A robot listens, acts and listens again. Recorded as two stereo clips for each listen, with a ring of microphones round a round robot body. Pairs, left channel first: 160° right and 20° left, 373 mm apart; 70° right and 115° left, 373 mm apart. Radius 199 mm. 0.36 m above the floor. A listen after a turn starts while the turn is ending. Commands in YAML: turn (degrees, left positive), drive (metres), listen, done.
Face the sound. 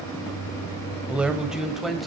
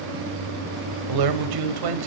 turn: 110
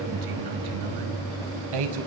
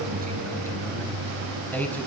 turn: 20
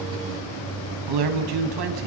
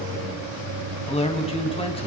done: "Found it: a man speaking, straight ahead, 2 to 4 m away."